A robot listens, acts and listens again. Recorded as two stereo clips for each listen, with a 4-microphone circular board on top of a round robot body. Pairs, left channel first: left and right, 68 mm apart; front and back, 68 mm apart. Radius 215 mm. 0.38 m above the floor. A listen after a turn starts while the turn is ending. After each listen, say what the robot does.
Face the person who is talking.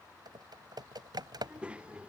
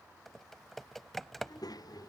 Turn 15° right.
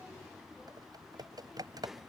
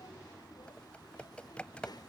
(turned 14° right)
Facing the child speaking.